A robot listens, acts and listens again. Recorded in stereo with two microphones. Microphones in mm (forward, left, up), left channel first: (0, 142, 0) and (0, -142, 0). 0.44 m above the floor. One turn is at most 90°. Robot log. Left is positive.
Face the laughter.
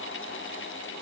cmd idle
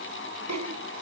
note: The laughter: about 70° right or 110° right.
cmd yaw -70
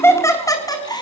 note: So it is at 15° left.
cmd yaw +15
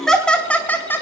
note: The laughter is now 10° left.
cmd yaw +10
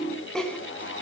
end: Found it: laughter, straight ahead.